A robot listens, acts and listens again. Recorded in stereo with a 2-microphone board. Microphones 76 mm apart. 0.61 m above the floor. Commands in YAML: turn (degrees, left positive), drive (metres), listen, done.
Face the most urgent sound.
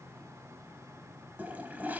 listen: true
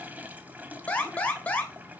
turn: 20
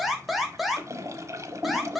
done: "Facing the alarm."